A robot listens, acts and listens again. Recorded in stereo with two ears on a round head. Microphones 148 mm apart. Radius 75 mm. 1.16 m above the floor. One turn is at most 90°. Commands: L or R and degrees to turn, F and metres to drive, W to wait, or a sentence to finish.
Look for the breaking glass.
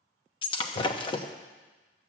L30
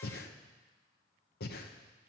W
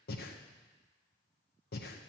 I heard breaking glass, but can't make it out now. It was about straight ahead or 120° left.